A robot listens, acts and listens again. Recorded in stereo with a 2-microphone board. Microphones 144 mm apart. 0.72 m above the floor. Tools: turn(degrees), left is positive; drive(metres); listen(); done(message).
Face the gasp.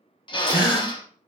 turn(degrees=-30)
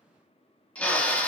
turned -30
listen()
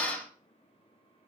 done("I heard a gasp, but can't make it out now. It was about straight ahead or 120° right.")